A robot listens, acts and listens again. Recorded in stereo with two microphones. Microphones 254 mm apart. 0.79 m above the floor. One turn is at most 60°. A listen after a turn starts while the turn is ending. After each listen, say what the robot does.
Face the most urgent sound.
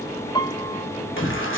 Turn 50° left.
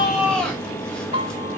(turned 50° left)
Found it: a shout, straight ahead, 2 to 4 m away.